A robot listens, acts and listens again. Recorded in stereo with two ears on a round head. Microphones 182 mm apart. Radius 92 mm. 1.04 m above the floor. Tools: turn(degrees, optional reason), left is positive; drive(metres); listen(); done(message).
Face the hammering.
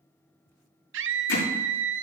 turn(degrees=70, reason="The hammering: about 70° left or 110° left.")
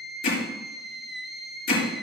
turn(degrees=45, reason="So it is at 45° left.")
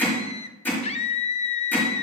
turn(degrees=10, reason="The hammering is now 10° left.")
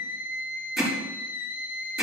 done("Found it: hammering, straight ahead, over 4 m away.")